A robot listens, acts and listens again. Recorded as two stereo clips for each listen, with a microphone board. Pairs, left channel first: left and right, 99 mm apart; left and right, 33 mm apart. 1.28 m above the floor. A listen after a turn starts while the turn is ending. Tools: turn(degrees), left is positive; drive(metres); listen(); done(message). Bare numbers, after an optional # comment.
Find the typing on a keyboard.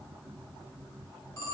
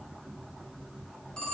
listen()
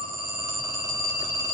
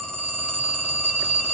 listen()
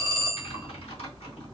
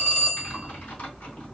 turn(90)
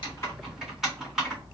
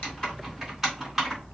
done("Found it: typing on a keyboard, straight ahead, 2 to 4 m away.")